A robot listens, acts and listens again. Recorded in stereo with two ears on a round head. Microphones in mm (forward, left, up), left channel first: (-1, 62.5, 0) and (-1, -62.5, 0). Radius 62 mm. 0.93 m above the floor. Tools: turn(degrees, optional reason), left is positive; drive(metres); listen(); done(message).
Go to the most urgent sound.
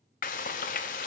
listen()
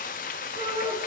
turn(degrees=-35, reason="The shout: about 35° right or 145° right.")
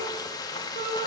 turn(degrees=-110, reason="So it is at 110° right.")
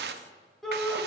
drive(metres=1.0)
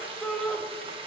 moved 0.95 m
drive(metres=1.0)
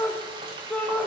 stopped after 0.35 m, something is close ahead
turn(degrees=10, reason="The shout is now 10° left.")
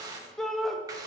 done("I am next to the shout.")